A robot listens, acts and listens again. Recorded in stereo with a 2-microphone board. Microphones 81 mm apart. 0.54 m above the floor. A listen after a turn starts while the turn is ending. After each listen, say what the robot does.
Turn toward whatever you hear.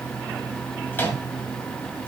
Turn 25° left.
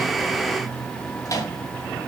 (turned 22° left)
Turn 130° left.
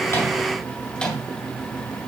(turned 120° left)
Turn 15° left.
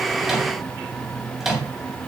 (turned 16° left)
Facing the microwave, 2 to 4 m away.